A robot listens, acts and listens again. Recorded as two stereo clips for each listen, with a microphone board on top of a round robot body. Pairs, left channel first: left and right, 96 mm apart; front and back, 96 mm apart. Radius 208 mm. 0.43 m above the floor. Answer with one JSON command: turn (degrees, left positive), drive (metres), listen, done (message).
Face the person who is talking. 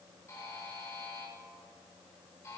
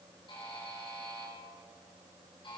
{"listen": true}
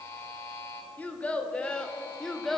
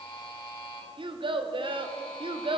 {"turn": 175}
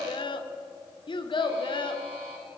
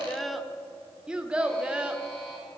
{"turn": 100}
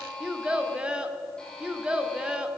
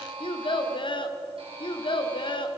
{"turn": -10}
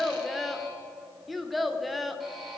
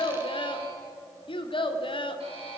{"done": "Found it: a child speaking, straight ahead."}